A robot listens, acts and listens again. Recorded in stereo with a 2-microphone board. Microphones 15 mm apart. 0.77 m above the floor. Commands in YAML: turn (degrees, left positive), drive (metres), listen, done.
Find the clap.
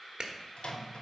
turn: -50
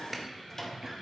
listen: true
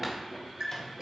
listen: true
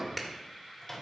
done: "I heard a clap, but can't make it out now. It was about straight ahead or 80° right."